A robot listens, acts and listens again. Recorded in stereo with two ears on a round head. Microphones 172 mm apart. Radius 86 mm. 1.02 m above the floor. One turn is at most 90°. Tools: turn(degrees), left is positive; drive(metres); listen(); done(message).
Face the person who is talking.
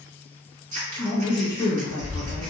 turn(degrees=20)
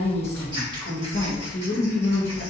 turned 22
turn(degrees=90)
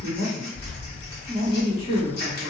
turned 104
turn(degrees=35)
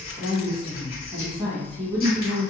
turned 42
turn(degrees=-10)
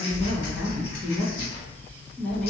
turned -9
done("Facing the woman speaking.")